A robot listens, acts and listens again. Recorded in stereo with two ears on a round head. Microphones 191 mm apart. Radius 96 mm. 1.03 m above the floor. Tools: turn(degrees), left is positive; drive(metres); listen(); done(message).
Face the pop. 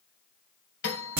listen()
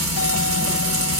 listen()
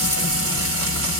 done("I can't make out a pop, only frying and a doorbell.")